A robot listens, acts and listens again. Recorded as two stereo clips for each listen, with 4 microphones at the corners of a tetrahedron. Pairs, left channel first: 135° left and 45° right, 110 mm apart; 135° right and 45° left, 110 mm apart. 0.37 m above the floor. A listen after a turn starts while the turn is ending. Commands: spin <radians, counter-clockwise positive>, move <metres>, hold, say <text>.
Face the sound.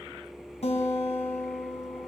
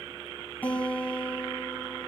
spin 2.62
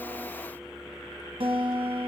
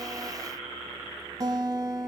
spin -0.17
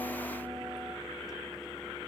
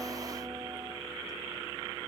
hold
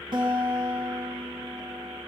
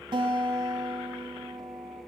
say Facing the guitar, 1 to 2 m away.